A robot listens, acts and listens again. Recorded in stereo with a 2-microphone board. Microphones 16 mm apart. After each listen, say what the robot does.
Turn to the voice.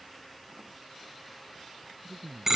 Turn 65° right.
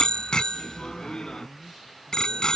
Found it: a man speaking, straight ahead.